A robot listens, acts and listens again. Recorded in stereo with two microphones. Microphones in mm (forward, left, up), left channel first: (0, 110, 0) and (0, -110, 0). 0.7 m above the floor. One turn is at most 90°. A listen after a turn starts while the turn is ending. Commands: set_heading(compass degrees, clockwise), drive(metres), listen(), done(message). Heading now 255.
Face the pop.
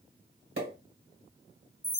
set_heading(320)
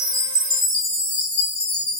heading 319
listen()
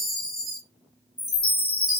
done("I heard a pop, but can't make it out now. It was about straight ahead or 50° right.")